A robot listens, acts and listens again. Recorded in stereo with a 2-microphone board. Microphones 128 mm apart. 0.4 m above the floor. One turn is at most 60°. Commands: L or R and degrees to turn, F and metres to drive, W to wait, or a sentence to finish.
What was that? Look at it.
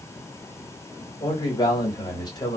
L35
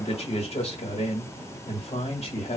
L60
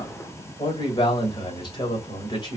L45
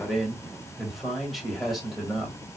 Found it: a man speaking, straight ahead.